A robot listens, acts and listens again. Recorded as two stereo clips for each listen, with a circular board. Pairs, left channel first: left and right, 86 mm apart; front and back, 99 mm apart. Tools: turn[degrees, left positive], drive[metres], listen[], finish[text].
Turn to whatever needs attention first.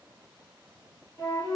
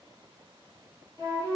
Action: listen[]
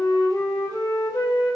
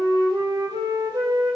Action: listen[]
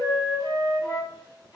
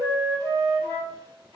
Action: finish[I can't make out anything urgent to turn to.]